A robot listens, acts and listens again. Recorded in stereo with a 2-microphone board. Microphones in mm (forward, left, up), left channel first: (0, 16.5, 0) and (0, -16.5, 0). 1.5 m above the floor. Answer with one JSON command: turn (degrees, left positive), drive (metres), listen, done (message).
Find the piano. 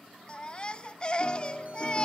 {"turn": 30}
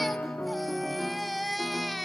{"turn": 115}
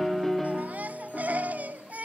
{"turn": 10}
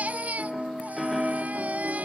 {"done": "Found it: a piano, straight ahead."}